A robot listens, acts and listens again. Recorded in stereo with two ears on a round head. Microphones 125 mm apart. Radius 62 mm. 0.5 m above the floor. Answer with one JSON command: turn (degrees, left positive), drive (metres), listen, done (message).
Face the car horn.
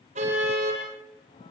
{"turn": -55}
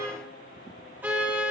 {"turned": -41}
{"turn": -15}
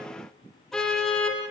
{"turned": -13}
{"done": "Facing the car horn, over 4 m away."}